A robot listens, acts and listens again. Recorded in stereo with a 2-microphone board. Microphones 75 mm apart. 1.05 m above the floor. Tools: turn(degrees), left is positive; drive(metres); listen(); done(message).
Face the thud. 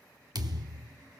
turn(degrees=-60)
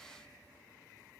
listen()
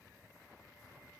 done("I heard a thud, but can't make it out now. It was about straight ahead or 60° right.")